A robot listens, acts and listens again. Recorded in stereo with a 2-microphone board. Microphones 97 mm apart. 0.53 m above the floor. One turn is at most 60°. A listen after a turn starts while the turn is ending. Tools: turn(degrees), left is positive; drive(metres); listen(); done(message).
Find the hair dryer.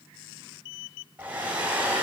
turn(degrees=-15)
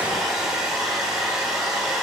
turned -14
done("Found it: a hair dryer, straight ahead.")